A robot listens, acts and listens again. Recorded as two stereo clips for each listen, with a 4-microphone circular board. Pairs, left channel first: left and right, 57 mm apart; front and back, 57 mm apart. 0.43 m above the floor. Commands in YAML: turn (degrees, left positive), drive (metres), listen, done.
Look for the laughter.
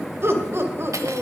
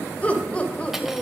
turn: -65
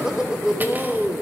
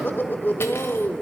turn: -40
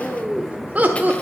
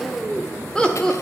turn: -70
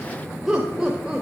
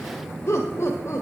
turn: -10
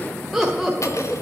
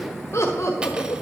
done: "Found it: laughter, straight ahead."